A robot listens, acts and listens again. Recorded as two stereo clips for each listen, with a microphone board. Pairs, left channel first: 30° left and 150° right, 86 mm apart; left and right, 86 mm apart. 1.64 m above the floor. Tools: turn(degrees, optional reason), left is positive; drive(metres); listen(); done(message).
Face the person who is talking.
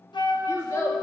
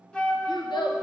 turn(degrees=85, reason="The child speaking: 85° left.")
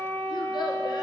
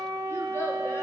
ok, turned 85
listen()
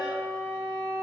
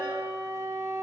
listen()
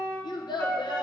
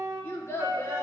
turn(degrees=35, reason="The child speaking is now 35° left.")
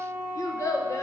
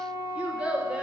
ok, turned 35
turn(degrees=-15, reason="The child speaking is now 15° right.")
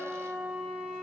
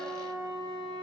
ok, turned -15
listen()
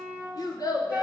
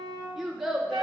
done("Found it: a child speaking, straight ahead, 1 to 2 m away.")